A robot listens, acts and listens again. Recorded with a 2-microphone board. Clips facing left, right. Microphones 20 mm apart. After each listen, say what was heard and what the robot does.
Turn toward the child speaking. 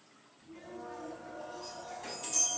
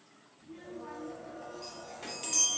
Turn 90° right.
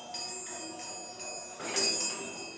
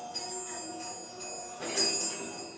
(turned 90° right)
So it is at 50° right. Turn 50° right.
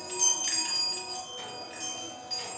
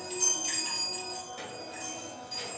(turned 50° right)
Keep listening.
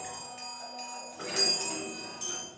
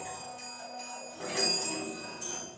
Keep listening.
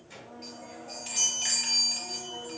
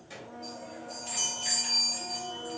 The child speaking is now 15° right. Turn 15° right.
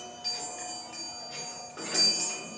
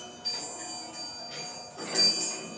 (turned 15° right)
Keep listening.
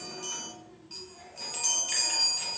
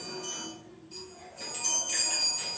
The child speaking is now 10° right. Turn 10° right.
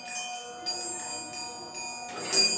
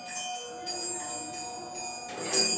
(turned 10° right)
Keep listening.
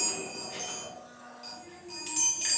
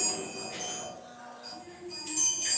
Facing the child speaking.